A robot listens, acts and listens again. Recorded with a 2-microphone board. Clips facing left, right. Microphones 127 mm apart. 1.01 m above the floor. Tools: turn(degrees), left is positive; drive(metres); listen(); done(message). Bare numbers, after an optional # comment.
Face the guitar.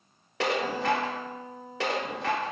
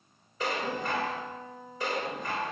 # The guitar: about 40° left or 140° left.
turn(40)
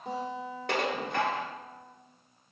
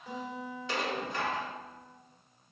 # So it is at 100° left.
turn(100)
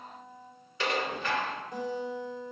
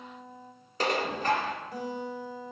done("Found it: a guitar, straight ahead.")